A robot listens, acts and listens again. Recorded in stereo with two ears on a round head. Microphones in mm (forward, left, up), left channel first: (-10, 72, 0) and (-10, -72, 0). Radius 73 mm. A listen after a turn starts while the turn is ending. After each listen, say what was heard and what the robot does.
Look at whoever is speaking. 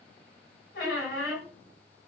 Keep listening.
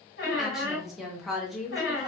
Turn 30° left.
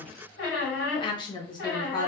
So it is at 150° left. Turn 150° left.
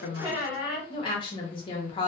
The woman speaking is now 30° left. Turn 30° left.
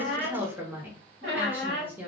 The woman speaking is now 15° right. Turn 15° right.
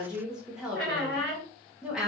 Facing the woman speaking, under 1 m away.